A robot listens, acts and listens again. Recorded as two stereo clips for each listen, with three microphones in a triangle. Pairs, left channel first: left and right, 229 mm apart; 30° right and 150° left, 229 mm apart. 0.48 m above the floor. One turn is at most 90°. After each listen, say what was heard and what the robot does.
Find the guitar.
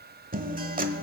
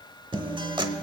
The guitar: 140° right. Turn 90° right.
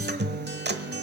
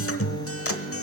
The guitar is now 45° right. Turn 45° right.
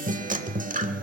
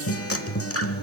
The guitar is now 35° right. Turn 35° right.
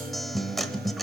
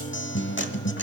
Facing the guitar, under 1 m away.